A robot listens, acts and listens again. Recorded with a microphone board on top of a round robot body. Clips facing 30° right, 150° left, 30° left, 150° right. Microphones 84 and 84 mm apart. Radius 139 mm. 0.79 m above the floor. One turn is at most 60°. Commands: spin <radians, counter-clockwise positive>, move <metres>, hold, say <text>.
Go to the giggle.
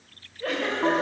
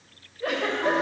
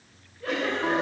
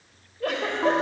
spin -1.05
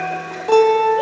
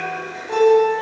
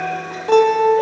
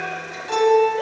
spin -1.05
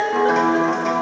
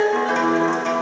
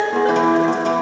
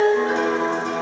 spin -0.26
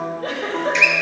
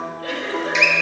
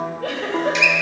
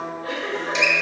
spin 0.35
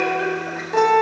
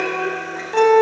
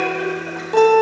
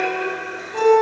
hold
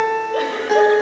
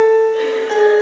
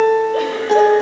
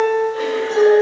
hold
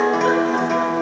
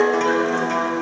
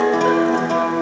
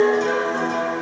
say I heard a giggle from this way, but can't make it out now. I did not reach it.